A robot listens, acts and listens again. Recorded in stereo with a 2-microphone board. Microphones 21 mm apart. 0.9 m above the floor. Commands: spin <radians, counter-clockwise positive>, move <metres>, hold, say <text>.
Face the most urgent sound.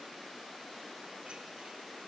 hold
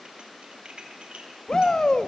spin 0.70
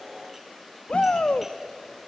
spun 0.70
spin 1.66
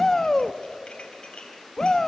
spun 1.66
spin 0.44
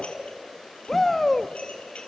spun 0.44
spin 0.26
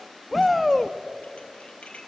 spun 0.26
say Facing the shout.